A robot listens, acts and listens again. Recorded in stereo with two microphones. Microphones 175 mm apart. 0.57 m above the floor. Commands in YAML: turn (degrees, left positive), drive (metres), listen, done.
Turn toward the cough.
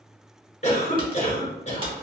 turn: 40
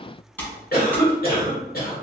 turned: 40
turn: 90
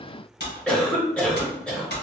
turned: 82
done: "Facing the cough, 1 to 2 m away."